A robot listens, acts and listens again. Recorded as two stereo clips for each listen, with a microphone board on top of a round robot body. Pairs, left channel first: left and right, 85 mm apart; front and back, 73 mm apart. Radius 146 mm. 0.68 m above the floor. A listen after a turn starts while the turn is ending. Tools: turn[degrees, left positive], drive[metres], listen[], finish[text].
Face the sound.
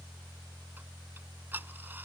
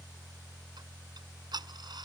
Thought: The ticking: 160° right.
Action: turn[-160]
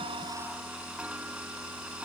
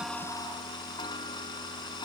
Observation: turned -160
Thought: The ticking is now 10° right.
Action: turn[-10]
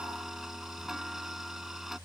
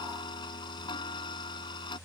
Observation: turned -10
Action: finish[Found it: ticking, straight ahead.]